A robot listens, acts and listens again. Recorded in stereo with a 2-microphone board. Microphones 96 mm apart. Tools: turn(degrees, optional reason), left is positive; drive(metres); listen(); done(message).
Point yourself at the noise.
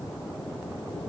listen()
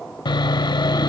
turn(degrees=50, reason="The sawing: about 50° left or 130° left.")
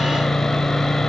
done("Found it: sawing, straight ahead, under 1 m away.")